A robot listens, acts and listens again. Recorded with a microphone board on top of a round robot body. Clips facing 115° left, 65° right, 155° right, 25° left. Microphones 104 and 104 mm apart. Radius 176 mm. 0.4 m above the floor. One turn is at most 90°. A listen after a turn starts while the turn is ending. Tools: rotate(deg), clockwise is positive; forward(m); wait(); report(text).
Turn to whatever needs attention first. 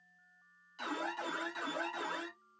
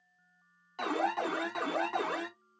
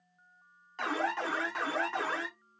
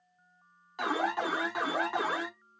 rotate(55)
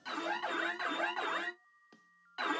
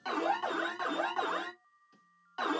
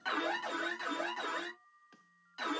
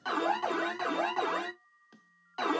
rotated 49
report("Facing the alarm, under 1 m away.")